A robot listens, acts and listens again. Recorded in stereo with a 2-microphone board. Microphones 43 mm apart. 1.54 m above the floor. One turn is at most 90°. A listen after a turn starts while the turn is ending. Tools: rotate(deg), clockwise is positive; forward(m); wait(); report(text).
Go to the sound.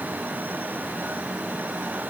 wait()
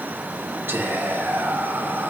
rotate(65)
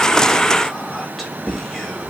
forward(1.0)
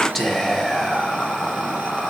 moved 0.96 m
forward(1.0)
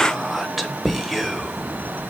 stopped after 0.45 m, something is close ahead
report("I am next to the whispering.")